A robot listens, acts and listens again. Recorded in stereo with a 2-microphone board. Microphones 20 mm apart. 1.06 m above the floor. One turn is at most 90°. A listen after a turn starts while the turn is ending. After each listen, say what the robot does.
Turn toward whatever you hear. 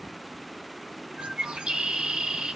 Turn 60° right.
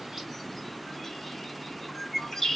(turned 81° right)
Turn 15° left.
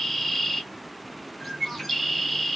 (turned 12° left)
Found it: a bird, straight ahead, under 1 m away.